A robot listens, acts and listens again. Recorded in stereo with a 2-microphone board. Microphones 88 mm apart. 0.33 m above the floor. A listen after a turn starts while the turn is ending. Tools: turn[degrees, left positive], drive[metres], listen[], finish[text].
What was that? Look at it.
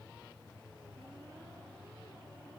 Action: listen[]
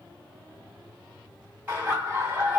Thought: The laughter: about 20° right or 160° right.
Action: turn[-20]
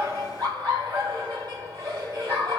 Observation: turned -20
Thought: So it is at 135° right.
Action: turn[-135]
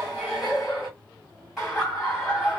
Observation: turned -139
Action: finish[Facing the laughter.]